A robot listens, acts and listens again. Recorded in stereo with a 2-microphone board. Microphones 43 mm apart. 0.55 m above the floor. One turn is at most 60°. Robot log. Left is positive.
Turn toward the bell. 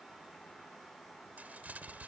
cmd idle
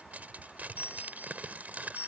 cmd yaw +60
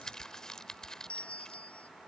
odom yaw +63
note: So it is at 35° left.
cmd yaw +35
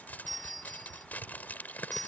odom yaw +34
end: Found it: a bell, straight ahead.